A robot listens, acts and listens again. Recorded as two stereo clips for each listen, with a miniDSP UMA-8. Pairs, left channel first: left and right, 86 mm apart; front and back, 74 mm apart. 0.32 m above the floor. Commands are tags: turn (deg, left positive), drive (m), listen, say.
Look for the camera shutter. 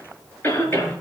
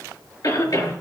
<listen/>
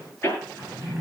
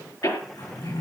<listen/>
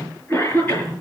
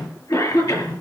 <say>I can't make out a camera shutter to turn to.</say>